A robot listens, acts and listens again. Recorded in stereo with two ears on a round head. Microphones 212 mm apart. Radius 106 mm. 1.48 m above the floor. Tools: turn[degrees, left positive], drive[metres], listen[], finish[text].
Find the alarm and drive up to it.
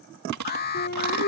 Thought: The alarm: about 45° left or 135° left.
Action: turn[45]
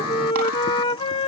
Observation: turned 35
Thought: So it is at 105° left.
Action: turn[105]
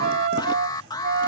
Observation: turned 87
Thought: The alarm is now 20° left.
Action: turn[20]
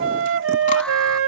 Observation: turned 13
Action: listen[]
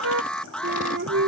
Action: drive[1.0]
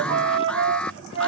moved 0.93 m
Action: drive[1.0]
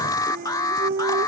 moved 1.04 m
Thought: The alarm is now 15° left.
Action: turn[15]
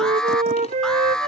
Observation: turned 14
Action: drive[1.0]
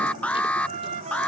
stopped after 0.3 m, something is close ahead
Action: finish[I am next to the alarm.]